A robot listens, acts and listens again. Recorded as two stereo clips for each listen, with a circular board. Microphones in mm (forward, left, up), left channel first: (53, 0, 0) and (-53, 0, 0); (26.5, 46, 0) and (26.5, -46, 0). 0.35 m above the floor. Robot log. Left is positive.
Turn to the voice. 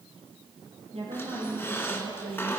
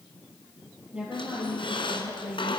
note: The woman speaking: 165° right.
cmd yaw -165
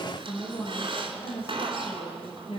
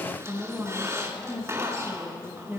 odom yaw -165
note: The woman speaking is now 20° right.
cmd yaw -20
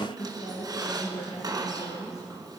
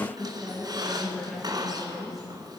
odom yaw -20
end: Facing the woman speaking, over 4 m away.